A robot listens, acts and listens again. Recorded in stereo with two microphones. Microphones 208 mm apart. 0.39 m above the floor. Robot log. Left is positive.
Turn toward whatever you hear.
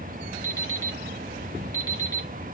note: The alarm clock: about 15° left or 165° left.
cmd yaw +15
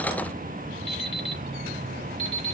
note: So it is at 150° left.
cmd yaw +150
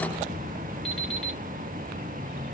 cmd idle
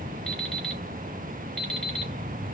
end: Found it: an alarm clock, straight ahead.